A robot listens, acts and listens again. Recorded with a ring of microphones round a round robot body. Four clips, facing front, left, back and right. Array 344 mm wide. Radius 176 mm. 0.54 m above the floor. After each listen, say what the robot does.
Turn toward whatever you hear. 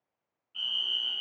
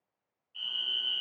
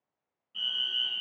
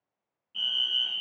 Turn 120° right.
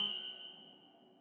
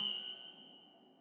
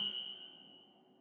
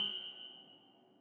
Keep listening.
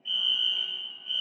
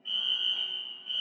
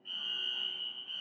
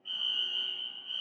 Turn 35° left.
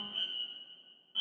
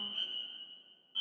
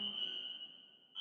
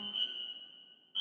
Turn 10° right.
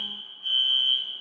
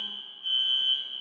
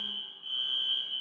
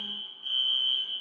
Facing the fire alarm, over 4 m away.